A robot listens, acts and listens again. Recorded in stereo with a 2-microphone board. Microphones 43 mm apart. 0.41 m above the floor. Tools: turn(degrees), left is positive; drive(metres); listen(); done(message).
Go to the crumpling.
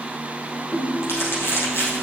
turn(degrees=90)
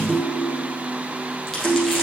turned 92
listen()
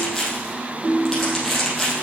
drive(metres=1.0)
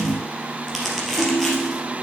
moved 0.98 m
drive(metres=1.0)
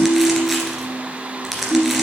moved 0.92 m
drive(metres=1.0)
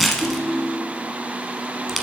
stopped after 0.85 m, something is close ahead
done("Arrived at the crumpling, straight ahead.")